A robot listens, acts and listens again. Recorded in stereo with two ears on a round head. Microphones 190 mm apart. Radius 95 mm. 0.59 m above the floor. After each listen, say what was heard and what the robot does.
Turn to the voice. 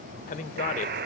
The man speaking: about 40° left or 140° left. Turn 40° left.
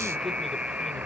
Keep listening.
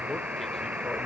Keep listening.
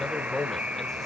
Facing the man speaking, 1 to 2 m away.